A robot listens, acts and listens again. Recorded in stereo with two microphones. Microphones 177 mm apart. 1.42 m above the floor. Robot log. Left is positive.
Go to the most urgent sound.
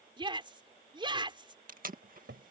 note: The shout: about 25° right or 155° right.
cmd yaw -25
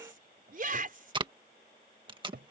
note: So it is at 130° right.
cmd yaw -130
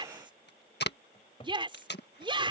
note: The shout is now 30° right.
cmd yaw -30
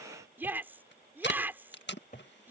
note: The shout is now 10° right.
cmd yaw -10
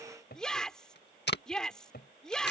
cmd fwd 1.0
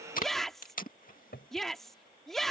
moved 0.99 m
cmd fwd 1.0
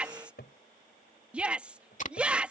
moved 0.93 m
cmd fwd 1.0
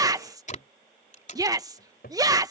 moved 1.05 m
note: The shout is now 20° right.
cmd yaw -20
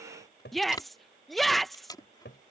cmd fwd 1.0
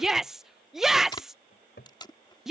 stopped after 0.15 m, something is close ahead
end: Arrived at the shout, straight ahead.